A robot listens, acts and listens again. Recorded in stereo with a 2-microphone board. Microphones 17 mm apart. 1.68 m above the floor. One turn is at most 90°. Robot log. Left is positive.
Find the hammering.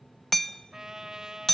note: The hammering: about 30° left or 150° left.
cmd yaw +30
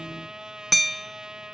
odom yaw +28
end: Found it: hammering, straight ahead, 1 to 2 m away.